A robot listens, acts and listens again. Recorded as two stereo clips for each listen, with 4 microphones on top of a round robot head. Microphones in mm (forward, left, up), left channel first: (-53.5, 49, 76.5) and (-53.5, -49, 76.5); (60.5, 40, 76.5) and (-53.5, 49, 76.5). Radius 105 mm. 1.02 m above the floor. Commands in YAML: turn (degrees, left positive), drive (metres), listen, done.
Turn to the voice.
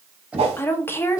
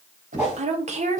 turn: 155
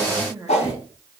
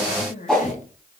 turn: -15
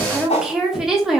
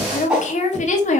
done: "Found it: a woman speaking, straight ahead."